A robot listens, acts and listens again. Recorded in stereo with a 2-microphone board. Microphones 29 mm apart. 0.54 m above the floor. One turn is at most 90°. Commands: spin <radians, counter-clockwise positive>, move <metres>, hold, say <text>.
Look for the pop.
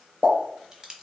spin -1.05
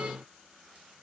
hold
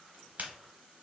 say I heard a pop, but can't make it out now. It was about straight ahead or 60° right.